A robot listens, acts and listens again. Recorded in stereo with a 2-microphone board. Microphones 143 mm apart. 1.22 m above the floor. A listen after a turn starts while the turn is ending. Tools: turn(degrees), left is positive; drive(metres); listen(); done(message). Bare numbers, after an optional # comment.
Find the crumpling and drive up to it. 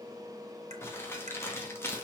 # The crumpling: about 20° left or 160° left.
turn(20)
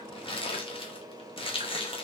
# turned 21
# So it is at 140° left.
turn(140)
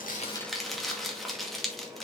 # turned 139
drive(1.0)
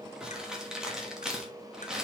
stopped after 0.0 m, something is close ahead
done("Blocked. The crumpling is further on, straight ahead.")